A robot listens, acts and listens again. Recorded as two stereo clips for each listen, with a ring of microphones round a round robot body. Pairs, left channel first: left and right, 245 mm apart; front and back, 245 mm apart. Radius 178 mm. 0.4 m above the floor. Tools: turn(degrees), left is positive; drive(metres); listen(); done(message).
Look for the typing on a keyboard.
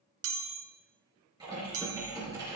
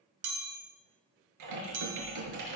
turn(degrees=-170)
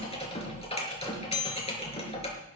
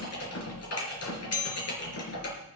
turn(degrees=25)
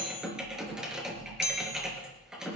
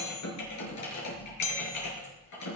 done("Facing the typing on a keyboard, over 4 m away.")